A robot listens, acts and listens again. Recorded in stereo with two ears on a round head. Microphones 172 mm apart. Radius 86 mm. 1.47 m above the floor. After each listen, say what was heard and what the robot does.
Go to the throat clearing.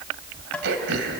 The throat clearing: about 60° right or 120° right. Turn 60° right.
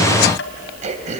So it is at 45° right. Turn 45° right.
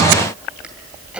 Drive 1.0 m forward.
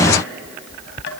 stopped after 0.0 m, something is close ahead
Keep listening.
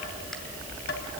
Keep listening.
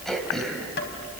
Something is in my way. I am facing the throat clearing but have not reached it.